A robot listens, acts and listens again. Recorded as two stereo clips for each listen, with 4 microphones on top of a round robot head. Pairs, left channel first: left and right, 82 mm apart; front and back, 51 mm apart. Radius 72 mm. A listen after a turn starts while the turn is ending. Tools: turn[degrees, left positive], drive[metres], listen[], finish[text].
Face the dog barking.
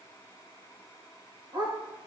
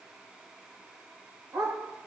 Thought: The dog barking: 130° right.
Action: turn[-130]
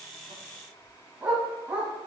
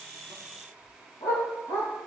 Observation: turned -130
Thought: The dog barking is now 10° right.
Action: turn[-10]
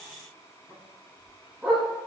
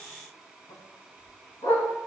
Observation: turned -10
Action: finish[Facing the dog barking.]